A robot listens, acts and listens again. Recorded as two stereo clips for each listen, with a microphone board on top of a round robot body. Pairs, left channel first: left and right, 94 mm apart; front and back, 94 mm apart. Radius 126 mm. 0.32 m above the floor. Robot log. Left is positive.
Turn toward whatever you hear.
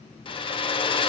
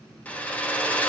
note: The hair dryer: 75° left.
cmd yaw +75
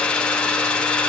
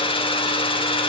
note: The hair dryer is now 10° left.
cmd yaw +10
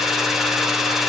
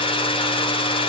end: Facing the hair dryer.